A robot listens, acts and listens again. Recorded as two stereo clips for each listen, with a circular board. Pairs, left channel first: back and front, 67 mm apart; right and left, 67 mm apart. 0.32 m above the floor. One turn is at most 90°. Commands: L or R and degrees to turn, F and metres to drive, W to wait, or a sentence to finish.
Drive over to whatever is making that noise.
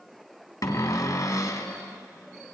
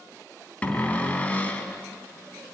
R90
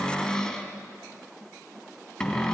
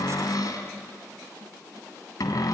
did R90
R90
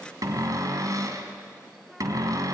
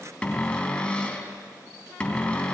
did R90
R20
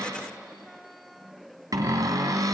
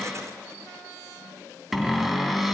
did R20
F1.0
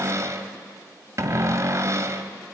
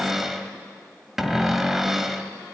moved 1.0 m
F1.0
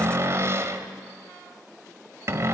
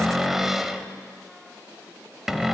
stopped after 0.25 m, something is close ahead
Arrived at the cupboard door, straight ahead.